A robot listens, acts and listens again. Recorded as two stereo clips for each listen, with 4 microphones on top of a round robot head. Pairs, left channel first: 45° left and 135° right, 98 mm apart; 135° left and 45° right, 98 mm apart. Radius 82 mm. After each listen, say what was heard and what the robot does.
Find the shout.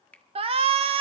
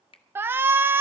The shout: 110° right. Turn 110° right.
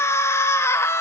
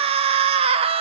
The shout is now 20° right. Turn 20° right.
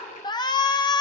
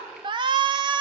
Found it: a shout, straight ahead.